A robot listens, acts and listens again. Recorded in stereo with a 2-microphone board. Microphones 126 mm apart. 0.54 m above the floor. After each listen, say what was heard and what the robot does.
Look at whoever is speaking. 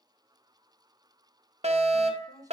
The woman speaking: about 25° right or 155° right. Turn 25° right.
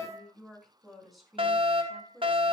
Facing the woman speaking, over 4 m away.